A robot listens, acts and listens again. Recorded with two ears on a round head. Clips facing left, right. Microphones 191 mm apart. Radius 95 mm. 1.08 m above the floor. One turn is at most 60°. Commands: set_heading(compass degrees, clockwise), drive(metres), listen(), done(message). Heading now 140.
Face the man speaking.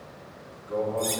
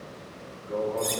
set_heading(175)
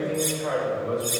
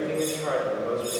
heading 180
set_heading(240)
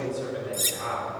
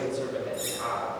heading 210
set_heading(265)
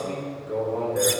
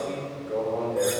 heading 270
set_heading(255)
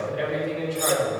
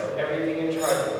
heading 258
done("Facing the man speaking.")